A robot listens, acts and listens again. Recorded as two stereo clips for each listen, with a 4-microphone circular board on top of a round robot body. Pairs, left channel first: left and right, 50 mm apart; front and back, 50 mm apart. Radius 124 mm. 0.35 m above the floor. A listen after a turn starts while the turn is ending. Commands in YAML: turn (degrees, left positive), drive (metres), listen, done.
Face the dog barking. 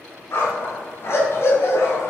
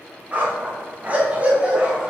turn: 110
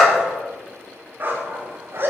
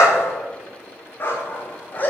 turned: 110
turn: -55
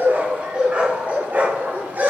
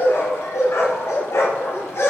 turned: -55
turn: -35
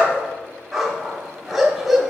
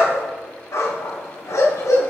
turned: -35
done: "Facing the dog barking, 1 to 2 m away."